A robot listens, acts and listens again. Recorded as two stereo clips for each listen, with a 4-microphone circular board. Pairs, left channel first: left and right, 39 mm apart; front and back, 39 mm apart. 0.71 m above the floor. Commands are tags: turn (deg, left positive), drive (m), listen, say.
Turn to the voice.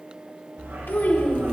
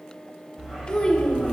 <turn deg="60"/>
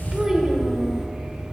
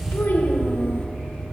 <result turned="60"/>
<listen/>
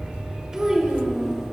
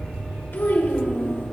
<turn deg="-10"/>
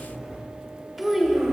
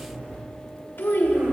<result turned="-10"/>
<say>Found it: a child speaking, straight ahead.</say>